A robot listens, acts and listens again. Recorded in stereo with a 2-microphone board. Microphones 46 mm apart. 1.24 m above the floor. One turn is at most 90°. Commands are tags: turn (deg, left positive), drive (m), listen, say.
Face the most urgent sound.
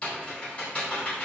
<listen/>
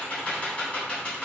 <listen/>
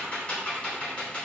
<say>I can't make out anything urgent, only typing on a keyboard.</say>